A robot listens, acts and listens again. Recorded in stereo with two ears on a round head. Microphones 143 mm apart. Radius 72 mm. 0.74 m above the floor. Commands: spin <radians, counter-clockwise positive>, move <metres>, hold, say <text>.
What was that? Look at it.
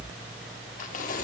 spin 0.96
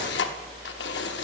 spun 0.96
spin 1.31
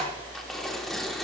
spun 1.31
say Found it: tearing paper, straight ahead, under 1 m away.